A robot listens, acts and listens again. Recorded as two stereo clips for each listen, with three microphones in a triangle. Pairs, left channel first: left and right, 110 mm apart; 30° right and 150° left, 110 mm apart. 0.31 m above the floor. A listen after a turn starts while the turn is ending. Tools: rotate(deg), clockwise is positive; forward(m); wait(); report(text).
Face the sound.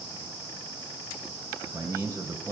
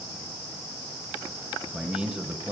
rotate(140)
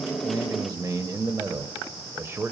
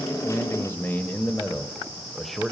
rotate(125)
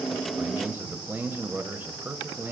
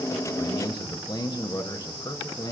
rotate(30)
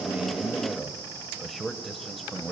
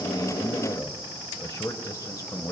report("Facing the man speaking, 1 to 2 m away.")